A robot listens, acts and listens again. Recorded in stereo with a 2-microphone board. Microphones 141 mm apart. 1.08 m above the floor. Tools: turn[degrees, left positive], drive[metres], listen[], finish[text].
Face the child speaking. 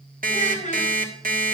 Thought: The child speaking: about 60° left or 120° left.
Action: turn[60]
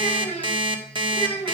Thought: So it is at 45° left.
Action: turn[45]
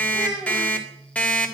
Action: finish[Found it: a child speaking, straight ahead.]